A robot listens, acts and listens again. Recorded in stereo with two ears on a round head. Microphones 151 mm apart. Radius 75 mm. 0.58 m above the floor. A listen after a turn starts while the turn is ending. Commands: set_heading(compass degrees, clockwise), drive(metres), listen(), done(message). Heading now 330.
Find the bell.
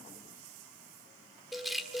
set_heading(300)
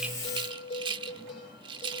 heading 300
set_heading(150)
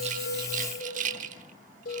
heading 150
set_heading(90)
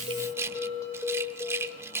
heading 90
set_heading(70)
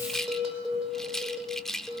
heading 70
done("Found it: a bell, straight ahead.")